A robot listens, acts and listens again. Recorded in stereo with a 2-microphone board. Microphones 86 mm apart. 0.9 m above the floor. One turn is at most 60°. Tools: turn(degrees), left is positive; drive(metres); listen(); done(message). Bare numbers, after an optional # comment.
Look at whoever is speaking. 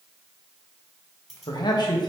# The man speaking: about 55° left or 125° left.
turn(55)
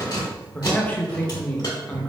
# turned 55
# So it is at 20° left.
turn(20)
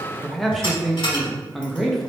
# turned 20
done("Found it: a man speaking, straight ahead, under 1 m away.")